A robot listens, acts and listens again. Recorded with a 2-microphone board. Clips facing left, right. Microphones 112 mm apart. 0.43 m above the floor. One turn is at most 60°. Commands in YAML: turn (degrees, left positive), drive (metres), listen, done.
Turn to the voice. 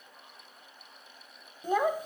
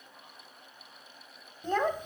turn: 30
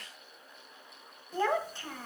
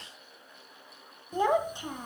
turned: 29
turn: -15
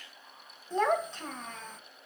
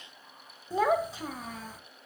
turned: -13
done: "Found it: a child speaking, straight ahead."